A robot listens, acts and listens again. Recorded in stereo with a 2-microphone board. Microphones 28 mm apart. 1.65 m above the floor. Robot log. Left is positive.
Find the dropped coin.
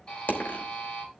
note: The dropped coin: about 70° left or 110° left.
cmd yaw +70
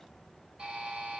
cmd idle
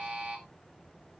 end: I heard a dropped coin, but can't make it out now. It was about straight ahead or 40° left.